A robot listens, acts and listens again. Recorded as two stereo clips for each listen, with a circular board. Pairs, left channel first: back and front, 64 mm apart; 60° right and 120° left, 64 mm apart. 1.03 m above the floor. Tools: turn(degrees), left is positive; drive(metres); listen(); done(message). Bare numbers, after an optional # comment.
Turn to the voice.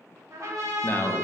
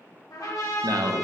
# The man speaking: 125° left.
turn(125)
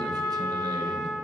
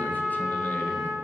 listen()
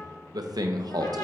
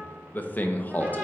done("Facing the man speaking.")